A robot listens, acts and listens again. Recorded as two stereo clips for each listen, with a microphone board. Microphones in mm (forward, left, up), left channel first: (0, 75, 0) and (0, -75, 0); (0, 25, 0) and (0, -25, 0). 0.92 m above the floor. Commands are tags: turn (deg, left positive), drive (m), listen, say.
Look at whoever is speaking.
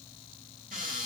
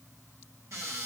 <listen/>
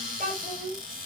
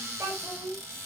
<turn deg="-70"/>
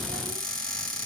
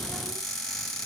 <listen/>
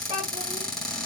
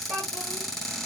<turn deg="-40"/>
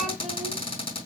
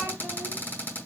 <listen/>
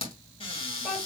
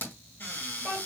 <say>Facing the child speaking, 2 to 4 m away.</say>